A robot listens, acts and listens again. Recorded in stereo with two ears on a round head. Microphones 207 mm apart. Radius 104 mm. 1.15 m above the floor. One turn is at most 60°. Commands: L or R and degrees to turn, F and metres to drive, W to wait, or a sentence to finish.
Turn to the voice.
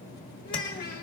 L40
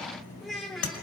Found it: a child speaking, straight ahead, 1 to 2 m away.